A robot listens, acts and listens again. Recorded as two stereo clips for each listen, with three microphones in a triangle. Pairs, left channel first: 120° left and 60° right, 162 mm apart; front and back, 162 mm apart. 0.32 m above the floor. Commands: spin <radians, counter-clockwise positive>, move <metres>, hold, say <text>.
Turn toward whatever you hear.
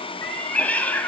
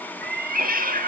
spin -2.79
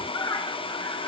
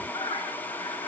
spin 0.96
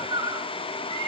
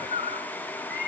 say Found it: a cat meowing, straight ahead.